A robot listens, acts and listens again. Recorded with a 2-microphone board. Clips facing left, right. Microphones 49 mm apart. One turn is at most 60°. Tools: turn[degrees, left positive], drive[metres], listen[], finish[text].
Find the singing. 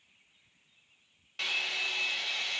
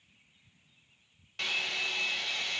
Action: listen[]
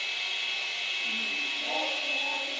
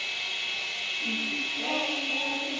Thought: The singing: about 60° right or 120° right.
Action: turn[-60]
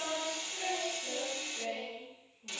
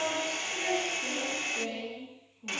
Thought: So it is at 65° right.
Action: turn[-60]
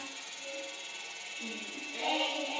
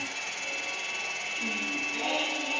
Thought: The singing is now 30° right.
Action: turn[-30]
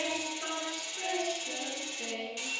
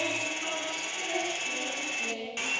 Action: finish[Found it: singing, straight ahead.]